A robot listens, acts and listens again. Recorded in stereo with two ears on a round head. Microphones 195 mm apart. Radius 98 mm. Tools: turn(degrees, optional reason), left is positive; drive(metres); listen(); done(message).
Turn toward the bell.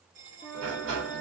turn(degrees=-40, reason="The bell: about 40° right or 140° right.")
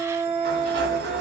listen()
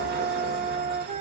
listen()
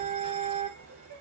done("I heard a bell, but can't make it out now. It was about straight ahead or 100° right.")